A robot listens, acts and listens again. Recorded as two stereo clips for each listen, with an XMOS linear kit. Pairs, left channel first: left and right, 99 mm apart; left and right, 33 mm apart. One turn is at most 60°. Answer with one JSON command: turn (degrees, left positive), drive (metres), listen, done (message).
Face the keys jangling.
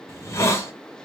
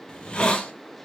{"listen": true}
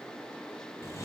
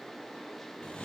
{"listen": true}
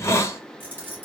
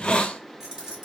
{"turn": -20}
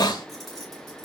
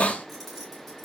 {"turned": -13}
{"turn": 30}
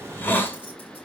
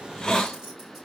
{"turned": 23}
{"listen": true}
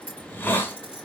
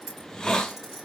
{"turn": -10}
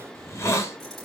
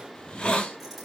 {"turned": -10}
{"listen": true}
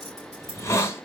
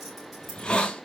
{"listen": true}
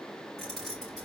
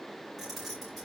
{"done": "Facing the keys jangling, over 4 m away."}